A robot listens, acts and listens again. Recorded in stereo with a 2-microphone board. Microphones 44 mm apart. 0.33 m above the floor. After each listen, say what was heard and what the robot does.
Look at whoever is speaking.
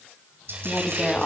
The woman speaking: about 25° left or 155° left. Turn 25° left.
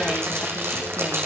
Keep listening.
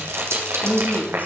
So it is at 125° left. Turn 125° left.
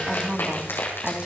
The woman speaking is now 25° right. Turn 25° right.
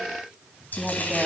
Keep listening.
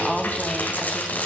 Found it: a woman speaking, straight ahead.